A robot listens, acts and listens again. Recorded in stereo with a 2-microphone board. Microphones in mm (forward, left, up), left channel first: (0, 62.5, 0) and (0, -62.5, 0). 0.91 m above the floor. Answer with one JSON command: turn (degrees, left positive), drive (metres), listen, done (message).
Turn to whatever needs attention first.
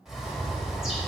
{"listen": true}
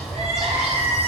{"turn": -50}
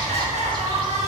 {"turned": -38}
{"turn": -85}
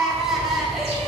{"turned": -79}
{"done": "Facing the crying, 1 to 2 m away."}